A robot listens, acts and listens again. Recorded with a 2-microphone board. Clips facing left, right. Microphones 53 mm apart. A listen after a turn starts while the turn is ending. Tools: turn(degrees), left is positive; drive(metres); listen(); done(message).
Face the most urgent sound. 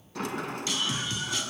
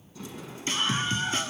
turn(degrees=-35)
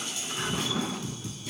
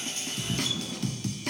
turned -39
turn(degrees=-105)
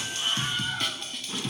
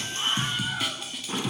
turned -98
done("Facing the scream, 2 to 4 m away.")